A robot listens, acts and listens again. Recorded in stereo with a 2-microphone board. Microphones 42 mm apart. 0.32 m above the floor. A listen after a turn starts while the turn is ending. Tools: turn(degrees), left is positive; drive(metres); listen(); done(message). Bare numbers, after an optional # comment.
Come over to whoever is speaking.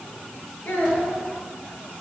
# The child speaking: about 50° left or 130° left.
turn(50)
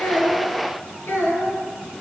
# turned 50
# So it is at 80° left.
turn(80)
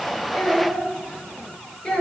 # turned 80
# The child speaking is now 25° left.
turn(25)
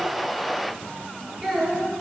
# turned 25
drive(1.0)
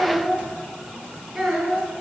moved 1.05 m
drive(1.0)
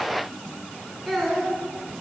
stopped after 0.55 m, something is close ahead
done("Something is in my way. I am facing the child speaking but have not reached it.")